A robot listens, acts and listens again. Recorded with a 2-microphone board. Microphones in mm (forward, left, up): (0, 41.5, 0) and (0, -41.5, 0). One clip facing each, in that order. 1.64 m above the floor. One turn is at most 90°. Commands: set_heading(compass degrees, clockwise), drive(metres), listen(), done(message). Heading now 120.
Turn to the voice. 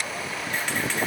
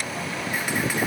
listen()
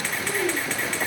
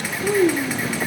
set_heading(150)
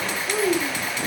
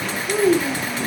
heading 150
done("Facing the child speaking, 2 to 4 m away.")